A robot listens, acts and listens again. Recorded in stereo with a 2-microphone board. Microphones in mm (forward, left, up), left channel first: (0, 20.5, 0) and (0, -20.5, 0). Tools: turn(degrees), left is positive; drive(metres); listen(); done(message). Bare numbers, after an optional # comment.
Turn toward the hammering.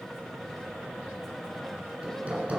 # The hammering: about 35° right or 145° right.
turn(-35)
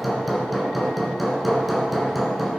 done("Found it: hammering, straight ahead, 2 to 4 m away.")